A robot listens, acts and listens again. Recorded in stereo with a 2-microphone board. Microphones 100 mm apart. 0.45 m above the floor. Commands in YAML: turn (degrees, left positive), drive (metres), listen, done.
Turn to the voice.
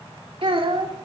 turn: -70
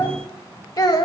turn: 45
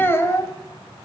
turn: 30
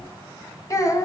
turn: 35
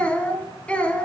turn: 10
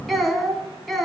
done: "Found it: a child speaking, straight ahead."